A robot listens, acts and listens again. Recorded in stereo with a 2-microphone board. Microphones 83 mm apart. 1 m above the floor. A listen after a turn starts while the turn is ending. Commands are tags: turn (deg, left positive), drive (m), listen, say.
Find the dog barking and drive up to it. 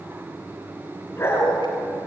<turn deg="30"/>
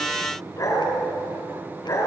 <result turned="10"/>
<turn deg="40"/>
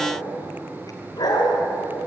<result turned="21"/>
<turn deg="120"/>
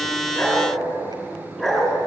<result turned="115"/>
<drive m="1.0"/>
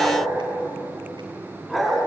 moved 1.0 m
<drive m="1.0"/>
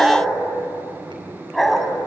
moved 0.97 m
<drive m="1.0"/>
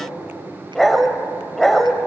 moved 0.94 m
<drive m="1.0"/>
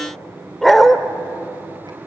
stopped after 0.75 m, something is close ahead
<say>Arrived at the dog barking, straight ahead.</say>